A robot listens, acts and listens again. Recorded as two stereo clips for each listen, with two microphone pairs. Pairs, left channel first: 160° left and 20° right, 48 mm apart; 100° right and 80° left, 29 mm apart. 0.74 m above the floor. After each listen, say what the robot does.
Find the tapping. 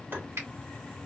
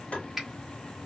Turn 65° right.
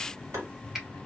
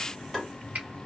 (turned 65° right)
Facing the tapping.